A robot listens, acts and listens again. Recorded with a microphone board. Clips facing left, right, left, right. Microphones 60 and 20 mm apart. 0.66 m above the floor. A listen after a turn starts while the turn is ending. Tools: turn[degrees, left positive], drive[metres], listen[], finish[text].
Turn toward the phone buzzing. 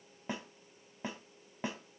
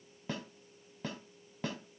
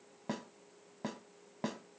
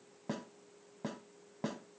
Action: listen[]
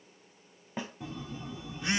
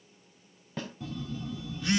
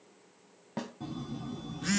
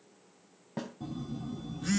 Thought: The phone buzzing: about 25° left or 155° left.
Action: turn[25]
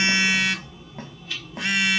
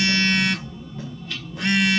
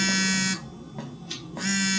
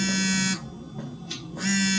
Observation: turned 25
Action: finish[Facing the phone buzzing.]